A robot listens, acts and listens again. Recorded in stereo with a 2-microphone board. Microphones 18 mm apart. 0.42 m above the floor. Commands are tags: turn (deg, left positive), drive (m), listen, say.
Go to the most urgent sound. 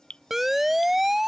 <turn deg="-30"/>
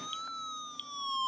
<turn deg="15"/>
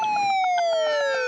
<drive m="1.0"/>
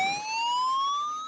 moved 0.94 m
<drive m="1.0"/>
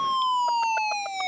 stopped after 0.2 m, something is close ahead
<say>Arrived at the siren, straight ahead.</say>